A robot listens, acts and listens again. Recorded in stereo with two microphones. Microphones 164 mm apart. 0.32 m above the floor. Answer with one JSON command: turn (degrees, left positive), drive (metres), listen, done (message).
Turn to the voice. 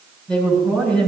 {"turn": 30}
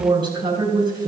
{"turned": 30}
{"turn": -25}
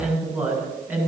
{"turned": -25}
{"turn": -15}
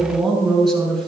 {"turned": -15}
{"done": "Facing the woman speaking."}